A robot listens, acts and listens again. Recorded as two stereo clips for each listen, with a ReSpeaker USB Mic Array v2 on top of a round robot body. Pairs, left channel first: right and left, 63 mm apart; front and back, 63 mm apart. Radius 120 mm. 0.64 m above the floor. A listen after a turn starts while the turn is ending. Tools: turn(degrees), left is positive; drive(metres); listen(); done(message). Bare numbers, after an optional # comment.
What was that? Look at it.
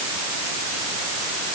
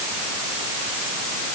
listen()
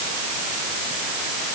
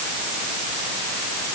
listen()
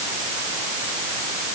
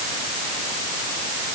done("I can't make out anything.")